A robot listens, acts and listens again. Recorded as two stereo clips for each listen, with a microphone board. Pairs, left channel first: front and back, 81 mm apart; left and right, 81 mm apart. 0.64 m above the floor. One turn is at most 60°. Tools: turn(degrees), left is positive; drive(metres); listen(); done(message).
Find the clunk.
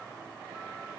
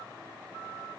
listen()
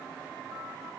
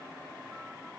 listen()
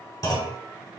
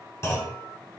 turn(degrees=40)
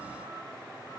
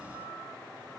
done("I heard a clunk from this way, but can't make it out now.")